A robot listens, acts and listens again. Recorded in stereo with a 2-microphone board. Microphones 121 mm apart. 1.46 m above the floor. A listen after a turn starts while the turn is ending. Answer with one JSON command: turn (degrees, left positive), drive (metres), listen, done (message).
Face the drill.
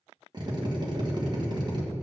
{"turn": -35}
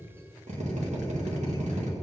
{"turn": -110}
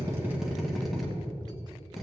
{"done": "Facing the drill."}